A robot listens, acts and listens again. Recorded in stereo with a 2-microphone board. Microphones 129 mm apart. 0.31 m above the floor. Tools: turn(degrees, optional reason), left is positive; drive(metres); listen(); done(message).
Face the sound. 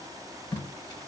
turn(degrees=30, reason="The tape being pulled: about 30° left or 150° left.")
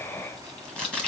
done("Facing the tape being pulled.")